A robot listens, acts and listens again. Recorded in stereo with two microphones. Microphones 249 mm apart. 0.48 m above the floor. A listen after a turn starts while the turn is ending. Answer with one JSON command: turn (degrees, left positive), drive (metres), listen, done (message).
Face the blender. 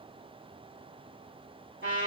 {"listen": true}
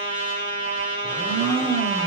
{"turn": -25}
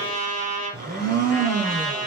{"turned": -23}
{"turn": -135}
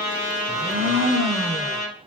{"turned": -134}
{"done": "Found it: a blender, straight ahead, under 1 m away."}